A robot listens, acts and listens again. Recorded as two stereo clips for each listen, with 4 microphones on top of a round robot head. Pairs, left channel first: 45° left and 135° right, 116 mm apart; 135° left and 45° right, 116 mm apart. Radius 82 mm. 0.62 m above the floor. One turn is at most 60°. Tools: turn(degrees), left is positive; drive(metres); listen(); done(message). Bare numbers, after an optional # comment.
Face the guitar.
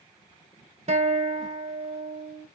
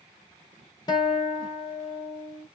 # The guitar: 170° right.
turn(-60)
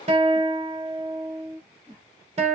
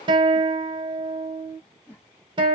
# The guitar is now 100° right.
turn(-60)
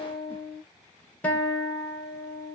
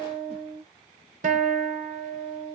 # The guitar is now 30° right.
turn(-30)
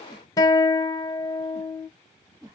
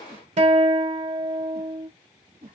# The guitar is now 20° right.
turn(-20)
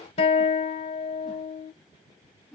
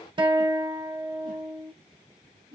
done("Facing the guitar.")